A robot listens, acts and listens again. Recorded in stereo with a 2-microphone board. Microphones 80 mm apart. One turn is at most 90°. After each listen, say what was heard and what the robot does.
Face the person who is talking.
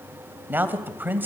The man speaking: about 25° right or 155° right. Turn 25° right.
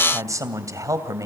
So it is at 130° right. Turn 90° right.
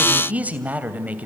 The man speaking is now 20° right. Turn 20° right.
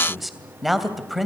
Found it: a man speaking, straight ahead.